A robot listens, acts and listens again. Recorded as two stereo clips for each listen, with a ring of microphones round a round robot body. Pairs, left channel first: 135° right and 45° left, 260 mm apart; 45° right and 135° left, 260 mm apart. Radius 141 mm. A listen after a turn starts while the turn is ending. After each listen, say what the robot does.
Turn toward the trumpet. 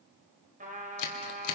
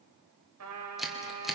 Turn 105° left.
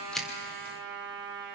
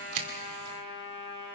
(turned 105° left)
Found it: a trumpet, straight ahead, over 4 m away.